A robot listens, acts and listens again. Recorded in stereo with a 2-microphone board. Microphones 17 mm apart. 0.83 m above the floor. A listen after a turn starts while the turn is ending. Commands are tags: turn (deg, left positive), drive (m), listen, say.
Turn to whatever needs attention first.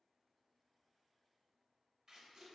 <listen/>
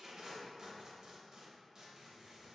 <listen/>
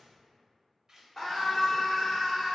<turn deg="15"/>
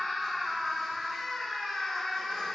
<turn deg="145"/>
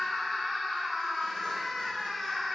<say>Found it: a scream, straight ahead, 1 to 2 m away.</say>